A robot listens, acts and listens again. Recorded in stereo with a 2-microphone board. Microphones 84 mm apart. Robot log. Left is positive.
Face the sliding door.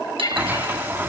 note: The sliding door: about 25° right or 155° right.
cmd yaw -25
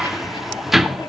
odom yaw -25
end: Found it: a sliding door, straight ahead.